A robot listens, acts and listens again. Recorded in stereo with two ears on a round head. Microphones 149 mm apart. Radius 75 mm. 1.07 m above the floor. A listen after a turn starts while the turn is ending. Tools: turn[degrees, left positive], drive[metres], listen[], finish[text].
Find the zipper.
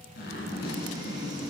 Thought: The zipper: about 65° left or 115° left.
Action: turn[65]
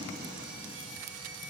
Action: listen[]
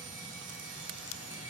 Action: listen[]
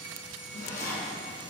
Thought: So it is at 50° left.
Action: turn[50]
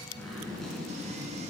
Action: finish[Facing the zipper, 2 to 4 m away.]